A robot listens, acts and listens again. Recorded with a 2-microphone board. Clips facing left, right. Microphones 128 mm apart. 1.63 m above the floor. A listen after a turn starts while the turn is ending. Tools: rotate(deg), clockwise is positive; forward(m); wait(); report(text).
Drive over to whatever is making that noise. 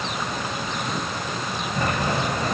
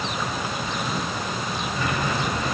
rotate(-45)
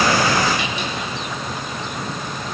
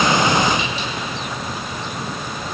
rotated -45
rotate(-80)
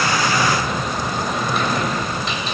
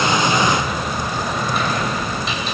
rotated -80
forward(1.0)
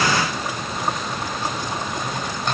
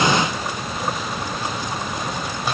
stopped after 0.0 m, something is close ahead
report("Something is in my way. I am facing the sliding door but have not reached it.")